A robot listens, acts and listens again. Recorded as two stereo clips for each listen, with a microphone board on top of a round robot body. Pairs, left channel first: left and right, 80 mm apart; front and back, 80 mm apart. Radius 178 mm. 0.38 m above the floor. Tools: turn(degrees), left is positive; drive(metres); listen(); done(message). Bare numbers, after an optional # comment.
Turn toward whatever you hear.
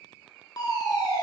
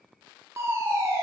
# The fire alarm: 125° left.
turn(125)
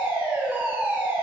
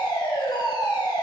# The fire alarm is now 25° right.
turn(-25)
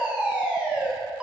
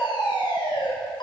# The fire alarm is now 15° right.
turn(-15)
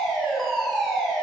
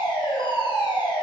done("Found it: a fire alarm, straight ahead.")